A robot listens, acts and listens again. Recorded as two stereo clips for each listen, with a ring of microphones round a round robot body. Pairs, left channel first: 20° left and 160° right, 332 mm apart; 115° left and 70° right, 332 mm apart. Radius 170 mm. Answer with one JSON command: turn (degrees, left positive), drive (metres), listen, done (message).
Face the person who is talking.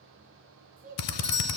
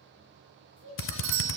{"turn": 140}
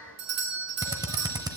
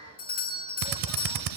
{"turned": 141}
{"listen": true}
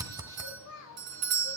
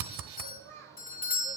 {"turn": -20}
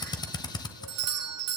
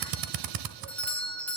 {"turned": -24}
{"listen": true}
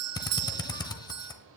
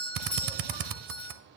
{"listen": true}
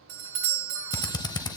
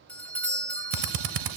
{"done": "Facing where the child speaking came from. I can't hear it now."}